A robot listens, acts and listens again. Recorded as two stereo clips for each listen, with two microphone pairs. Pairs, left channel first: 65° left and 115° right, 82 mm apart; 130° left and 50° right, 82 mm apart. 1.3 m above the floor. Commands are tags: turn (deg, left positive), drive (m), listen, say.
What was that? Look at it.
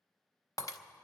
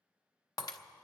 <turn deg="100"/>
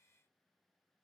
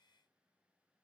<say>Facing where the breaking glass came from. I can't hear it now.</say>